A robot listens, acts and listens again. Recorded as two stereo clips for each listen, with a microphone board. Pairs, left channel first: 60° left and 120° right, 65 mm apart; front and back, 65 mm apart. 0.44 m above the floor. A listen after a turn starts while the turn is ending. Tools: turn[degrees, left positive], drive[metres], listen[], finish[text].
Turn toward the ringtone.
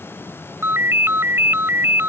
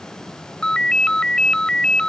Thought: The ringtone: 75° right.
Action: turn[-75]
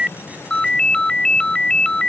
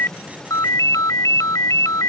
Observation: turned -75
Thought: The ringtone is now 15° right.
Action: turn[-15]
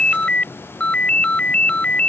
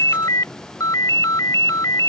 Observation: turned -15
Action: finish[Found it: a ringtone, straight ahead.]